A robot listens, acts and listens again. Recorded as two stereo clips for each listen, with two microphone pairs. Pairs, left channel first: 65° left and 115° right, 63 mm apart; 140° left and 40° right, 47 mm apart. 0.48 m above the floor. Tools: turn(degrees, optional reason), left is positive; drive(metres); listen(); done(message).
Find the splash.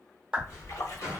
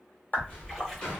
turn(degrees=55, reason="The splash: 55° left.")
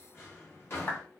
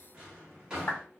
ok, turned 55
done("I heard a splash from this way, but can't make it out now.")